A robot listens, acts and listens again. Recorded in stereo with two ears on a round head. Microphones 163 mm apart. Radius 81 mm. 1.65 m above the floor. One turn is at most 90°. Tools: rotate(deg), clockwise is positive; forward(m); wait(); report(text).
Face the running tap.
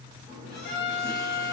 rotate(-30)
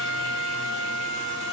wait()
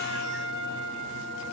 wait()
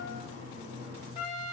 rotate(25)
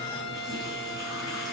report("Found it: a running tap, straight ahead.")